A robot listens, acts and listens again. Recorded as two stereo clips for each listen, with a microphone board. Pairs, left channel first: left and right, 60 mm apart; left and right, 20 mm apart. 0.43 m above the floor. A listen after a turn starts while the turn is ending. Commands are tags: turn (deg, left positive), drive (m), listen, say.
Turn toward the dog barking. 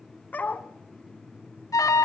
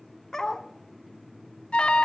<turn deg="30"/>
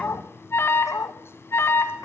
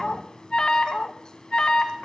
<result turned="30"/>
<turn deg="120"/>
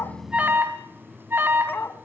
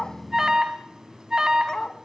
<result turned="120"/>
<turn deg="40"/>
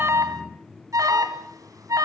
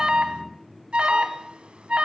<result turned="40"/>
<listen/>
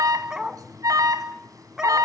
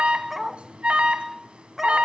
<turn deg="-10"/>
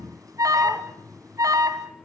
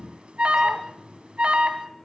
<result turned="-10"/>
<listen/>
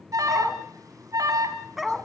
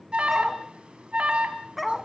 <say>Facing the dog barking.</say>